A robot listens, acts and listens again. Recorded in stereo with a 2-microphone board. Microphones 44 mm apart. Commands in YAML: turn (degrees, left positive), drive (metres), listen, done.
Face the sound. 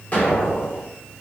turn: 45
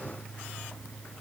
listen: true
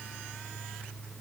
done: "I heard an explosion, but can't make it out now. It was about straight ahead or 90° left."